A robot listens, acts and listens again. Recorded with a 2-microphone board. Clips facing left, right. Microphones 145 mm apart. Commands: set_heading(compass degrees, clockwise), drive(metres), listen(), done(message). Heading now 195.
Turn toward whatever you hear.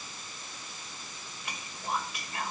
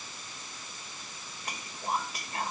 set_heading(235)
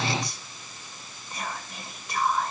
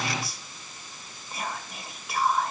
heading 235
done("Found it: whispering, straight ahead.")